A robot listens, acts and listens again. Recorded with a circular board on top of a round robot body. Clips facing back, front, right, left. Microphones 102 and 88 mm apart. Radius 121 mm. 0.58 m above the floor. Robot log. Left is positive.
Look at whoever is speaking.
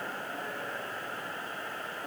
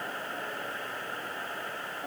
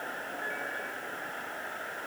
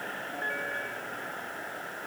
cmd idle
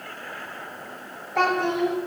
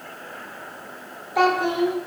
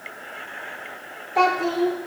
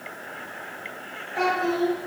note: The child speaking: 80° right.
cmd yaw -80
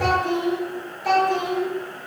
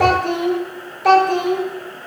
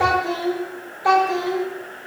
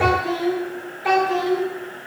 note: The child speaking is now 25° right.
cmd yaw -25
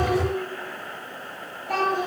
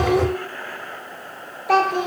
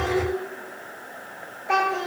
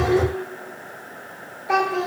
end: Found it: a child speaking, straight ahead.